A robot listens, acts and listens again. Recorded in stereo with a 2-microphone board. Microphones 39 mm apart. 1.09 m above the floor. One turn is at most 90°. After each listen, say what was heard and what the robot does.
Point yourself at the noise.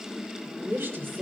Turn 90° right.
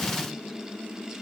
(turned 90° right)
Keep listening.
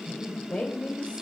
The woman speaking is now 35° left. Turn 35° left.
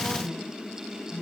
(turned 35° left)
The woman speaking is now 15° left. Turn 15° left.
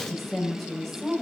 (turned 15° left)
Facing the woman speaking.